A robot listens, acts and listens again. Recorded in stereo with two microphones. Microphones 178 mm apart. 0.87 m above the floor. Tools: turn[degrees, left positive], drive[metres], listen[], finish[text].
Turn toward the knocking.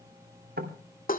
Thought: The knocking: about 65° right or 115° right.
Action: turn[-65]
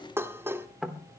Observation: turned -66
Action: finish[Facing the knocking.]